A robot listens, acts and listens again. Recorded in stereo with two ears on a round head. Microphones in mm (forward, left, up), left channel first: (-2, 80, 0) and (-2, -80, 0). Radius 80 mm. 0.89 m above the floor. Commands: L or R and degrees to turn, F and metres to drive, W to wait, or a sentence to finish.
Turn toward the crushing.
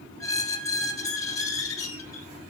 W
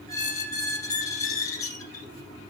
W
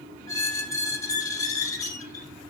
I can't make out crushing, only a squeak.